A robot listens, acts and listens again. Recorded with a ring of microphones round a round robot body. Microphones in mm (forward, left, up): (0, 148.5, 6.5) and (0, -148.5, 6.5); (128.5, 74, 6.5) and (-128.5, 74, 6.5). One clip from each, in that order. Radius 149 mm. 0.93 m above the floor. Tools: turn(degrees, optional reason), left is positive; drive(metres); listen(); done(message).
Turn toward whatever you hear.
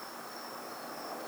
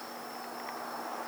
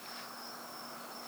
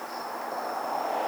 listen()
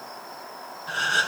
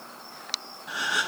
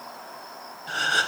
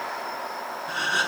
turn(degrees=10, reason="The gasp: 10° left.")
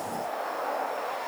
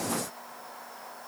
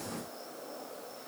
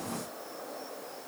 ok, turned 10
done("I heard a gasp from this way, but can't make it out now.")